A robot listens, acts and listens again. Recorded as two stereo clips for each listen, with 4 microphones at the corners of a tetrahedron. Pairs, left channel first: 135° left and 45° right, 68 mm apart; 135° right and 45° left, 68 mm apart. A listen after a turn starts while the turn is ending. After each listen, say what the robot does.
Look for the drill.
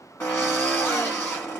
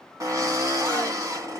Turn 75° left.
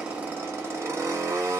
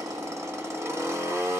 Facing the drill, 1 to 2 m away.